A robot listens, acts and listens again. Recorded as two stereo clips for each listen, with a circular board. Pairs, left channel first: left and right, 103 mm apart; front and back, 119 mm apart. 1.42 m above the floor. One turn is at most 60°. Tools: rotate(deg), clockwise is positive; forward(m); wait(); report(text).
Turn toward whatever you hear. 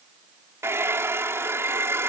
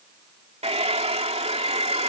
rotate(60)
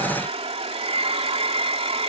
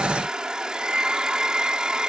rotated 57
rotate(60)
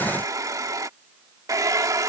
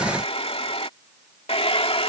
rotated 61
rotate(35)
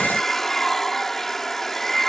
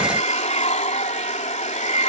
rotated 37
report("Facing the hair dryer.")